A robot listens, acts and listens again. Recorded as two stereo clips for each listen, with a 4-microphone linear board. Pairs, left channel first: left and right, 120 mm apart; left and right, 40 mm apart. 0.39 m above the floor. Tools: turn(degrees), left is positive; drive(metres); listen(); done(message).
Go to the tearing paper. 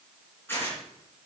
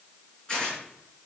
turn(degrees=20)
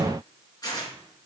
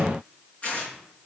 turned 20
turn(degrees=145)
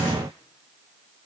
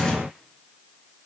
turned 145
listen()
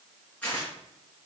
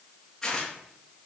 turn(degrees=15)
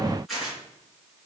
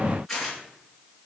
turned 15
drive(metres=1.0)
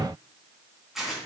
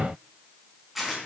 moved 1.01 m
drive(metres=1.0)
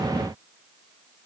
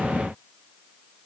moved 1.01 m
listen()
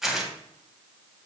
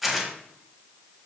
drive(metres=1.0)
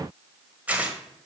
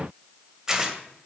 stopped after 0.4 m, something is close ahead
turn(degrees=-15)
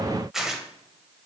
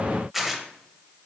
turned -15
done("Arrived at the tearing paper, straight ahead.")